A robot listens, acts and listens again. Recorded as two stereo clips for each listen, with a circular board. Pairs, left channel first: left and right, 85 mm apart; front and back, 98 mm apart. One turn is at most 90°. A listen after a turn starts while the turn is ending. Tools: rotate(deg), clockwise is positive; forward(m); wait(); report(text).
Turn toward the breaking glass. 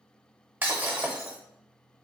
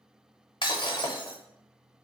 rotate(25)
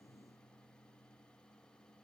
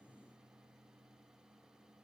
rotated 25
report("I heard breaking glass from this way, but can't make it out now.")